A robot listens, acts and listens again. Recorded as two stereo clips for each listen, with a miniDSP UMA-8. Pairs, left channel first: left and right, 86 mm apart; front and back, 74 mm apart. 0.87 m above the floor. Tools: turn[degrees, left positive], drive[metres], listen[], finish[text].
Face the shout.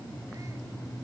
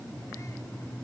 Action: listen[]
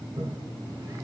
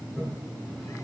Action: listen[]
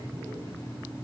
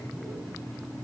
Action: finish[I can't make out a shout, only a toilet flushing.]